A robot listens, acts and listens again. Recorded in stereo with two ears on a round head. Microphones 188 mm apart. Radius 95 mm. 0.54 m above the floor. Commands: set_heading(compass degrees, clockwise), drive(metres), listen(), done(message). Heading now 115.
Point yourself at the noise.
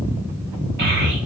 set_heading(165)
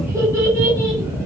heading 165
set_heading(175)
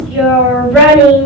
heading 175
done("Facing the child speaking.")